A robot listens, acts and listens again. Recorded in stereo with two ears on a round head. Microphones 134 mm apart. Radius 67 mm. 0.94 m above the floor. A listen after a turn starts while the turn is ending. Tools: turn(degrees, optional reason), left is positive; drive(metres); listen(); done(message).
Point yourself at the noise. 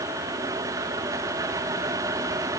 listen()
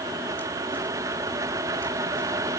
listen()
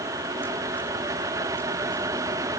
done("I can't make out anything to turn to.")